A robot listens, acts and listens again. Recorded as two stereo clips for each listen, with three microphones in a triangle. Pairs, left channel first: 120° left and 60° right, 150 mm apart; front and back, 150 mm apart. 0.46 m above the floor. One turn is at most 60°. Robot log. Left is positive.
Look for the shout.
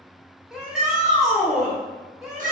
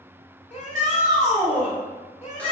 note: The shout: 25° left.
cmd yaw +25
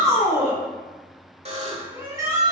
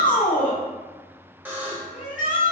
end: Facing the shout.